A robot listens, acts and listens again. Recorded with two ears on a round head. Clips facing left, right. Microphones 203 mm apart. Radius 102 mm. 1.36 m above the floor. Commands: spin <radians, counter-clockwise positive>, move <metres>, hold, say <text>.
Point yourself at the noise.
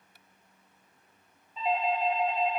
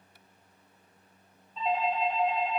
spin 0.52
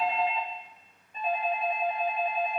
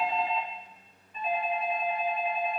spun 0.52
spin 2.44
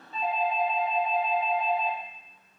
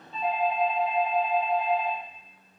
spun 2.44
say Found it: a doorbell, straight ahead.